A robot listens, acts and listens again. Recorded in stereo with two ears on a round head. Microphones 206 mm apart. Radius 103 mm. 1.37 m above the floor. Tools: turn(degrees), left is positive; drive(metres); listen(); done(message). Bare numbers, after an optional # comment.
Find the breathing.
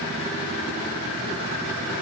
listen()
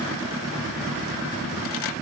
listen()
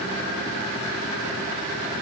done("I can't make out breathing.")